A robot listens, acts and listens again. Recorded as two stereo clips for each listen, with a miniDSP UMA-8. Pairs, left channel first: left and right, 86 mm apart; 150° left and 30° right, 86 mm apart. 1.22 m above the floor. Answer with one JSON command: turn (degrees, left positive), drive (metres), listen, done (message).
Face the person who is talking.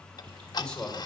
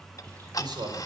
{"turn": 10}
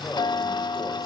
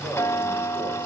{"listen": true}
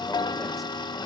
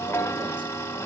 {"listen": true}
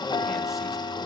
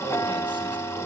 {"done": "Facing where the man speaking came from. I can't hear it now."}